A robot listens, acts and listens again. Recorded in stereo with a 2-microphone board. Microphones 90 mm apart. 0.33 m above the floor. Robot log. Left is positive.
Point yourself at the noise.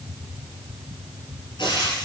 note: The frying: about 65° left or 115° left.
cmd yaw +65
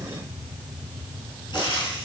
note: So it is at 50° left.
cmd yaw +50
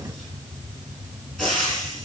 end: Facing the frying, over 4 m away.